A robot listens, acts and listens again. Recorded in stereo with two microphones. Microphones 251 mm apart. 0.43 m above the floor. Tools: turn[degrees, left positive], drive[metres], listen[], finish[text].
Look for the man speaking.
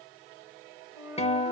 Action: listen[]
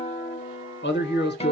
Thought: The man speaking: about 40° left or 140° left.
Action: turn[40]
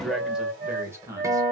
Thought: So it is at 10° right.
Action: turn[-10]
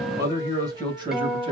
Thought: The man speaking is now 20° right.
Action: turn[-20]
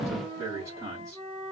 Thought: The man speaking is now 10° right.
Action: turn[-10]
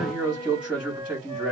Action: finish[Found it: a man speaking, straight ahead, 2 to 4 m away.]